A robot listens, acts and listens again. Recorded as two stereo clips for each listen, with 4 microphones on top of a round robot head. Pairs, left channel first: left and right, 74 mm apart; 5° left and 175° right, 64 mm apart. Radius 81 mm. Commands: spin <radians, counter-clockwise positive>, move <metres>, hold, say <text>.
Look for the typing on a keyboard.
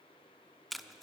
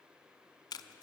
hold
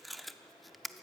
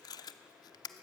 hold
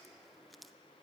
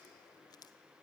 say I can't make out typing on a keyboard to turn to.